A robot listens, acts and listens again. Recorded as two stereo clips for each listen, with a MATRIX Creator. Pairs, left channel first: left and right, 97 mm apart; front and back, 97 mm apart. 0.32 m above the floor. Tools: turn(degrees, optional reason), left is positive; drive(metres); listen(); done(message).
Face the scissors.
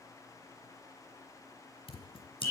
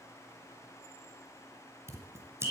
turn(degrees=115, reason="The scissors: 115° left.")
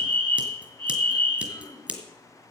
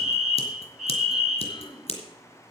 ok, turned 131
turn(degrees=-15, reason="The scissors is now 15° right.")
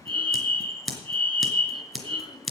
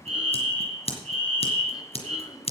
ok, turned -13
done("Facing the scissors.")